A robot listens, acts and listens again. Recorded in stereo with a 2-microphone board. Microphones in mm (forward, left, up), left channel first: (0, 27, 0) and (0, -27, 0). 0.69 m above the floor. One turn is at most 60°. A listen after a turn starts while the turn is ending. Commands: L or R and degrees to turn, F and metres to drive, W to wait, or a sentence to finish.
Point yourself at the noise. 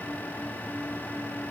W
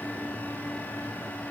W
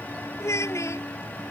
L55
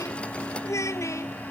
L60
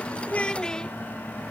L15
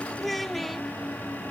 Facing the child speaking.